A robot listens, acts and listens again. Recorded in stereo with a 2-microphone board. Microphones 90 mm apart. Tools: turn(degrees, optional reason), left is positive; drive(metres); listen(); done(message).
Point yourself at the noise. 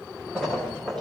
turn(degrees=30)
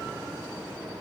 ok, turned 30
listen()
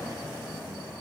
done("I heard a splash, but can't make it out now. It was about 20° right or 140° left.")